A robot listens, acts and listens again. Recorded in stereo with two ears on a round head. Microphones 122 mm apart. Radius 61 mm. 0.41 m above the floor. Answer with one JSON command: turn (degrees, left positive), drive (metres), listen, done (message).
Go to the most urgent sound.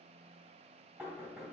{"listen": true}
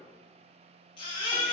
{"turn": 40}
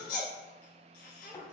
{"turn": 100}
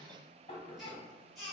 {"drive": 1.0}
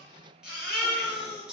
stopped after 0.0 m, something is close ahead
{"done": "Something is in my way. I am facing the baby crying but have not reached it."}